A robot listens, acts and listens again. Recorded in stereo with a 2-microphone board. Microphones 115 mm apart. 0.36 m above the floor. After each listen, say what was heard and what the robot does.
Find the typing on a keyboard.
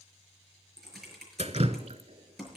Turn 30° left.
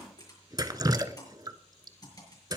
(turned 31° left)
So it is at 145° left. Turn 145° left.
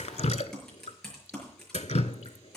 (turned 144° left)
Facing the typing on a keyboard.